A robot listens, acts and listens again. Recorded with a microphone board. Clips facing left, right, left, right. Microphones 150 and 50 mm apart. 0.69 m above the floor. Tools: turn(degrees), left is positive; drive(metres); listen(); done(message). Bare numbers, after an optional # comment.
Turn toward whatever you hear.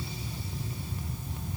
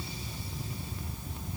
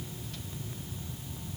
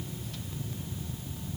listen()
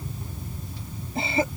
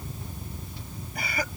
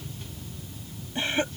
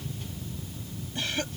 # The cough: about 25° left or 155° left.
turn(25)
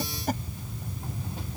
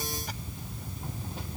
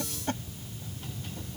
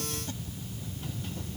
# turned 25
listen()
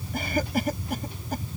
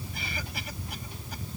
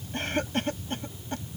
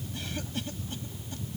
# So it is at 130° left.
turn(130)
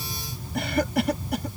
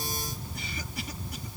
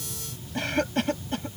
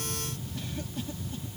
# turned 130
# The cough is now 75° left.
turn(75)
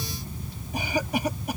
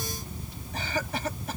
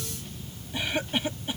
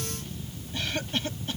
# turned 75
# The cough is now 15° left.
turn(15)
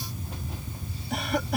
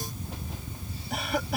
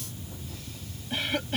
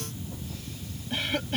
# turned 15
done("Found it: a cough, straight ahead.")